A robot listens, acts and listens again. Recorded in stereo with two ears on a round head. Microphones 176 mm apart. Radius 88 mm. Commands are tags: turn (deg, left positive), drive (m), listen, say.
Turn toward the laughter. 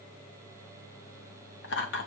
<turn deg="65"/>
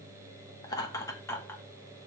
<turn deg="15"/>
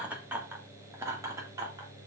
<turn deg="-20"/>
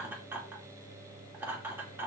<turn deg="-10"/>
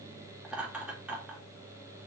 <say>Found it: laughter, straight ahead, 2 to 4 m away.</say>